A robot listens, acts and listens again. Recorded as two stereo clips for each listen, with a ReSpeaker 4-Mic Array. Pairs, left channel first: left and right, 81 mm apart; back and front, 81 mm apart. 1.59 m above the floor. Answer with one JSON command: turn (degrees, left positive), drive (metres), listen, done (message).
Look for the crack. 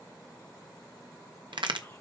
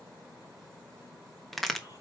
{"turn": -90}
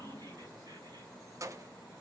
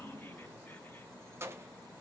{"done": "Facing where the crack came from. I can't hear it now."}